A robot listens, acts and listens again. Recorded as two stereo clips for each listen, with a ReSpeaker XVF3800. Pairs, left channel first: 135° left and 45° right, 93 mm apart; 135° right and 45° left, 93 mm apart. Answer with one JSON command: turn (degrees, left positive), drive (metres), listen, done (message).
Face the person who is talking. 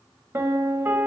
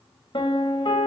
{"listen": true}
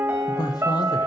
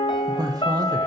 {"turn": 90}
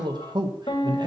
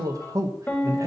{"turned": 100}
{"turn": -10}
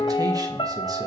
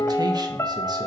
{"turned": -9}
{"listen": true}
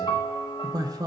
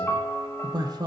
{"done": "Facing the man speaking."}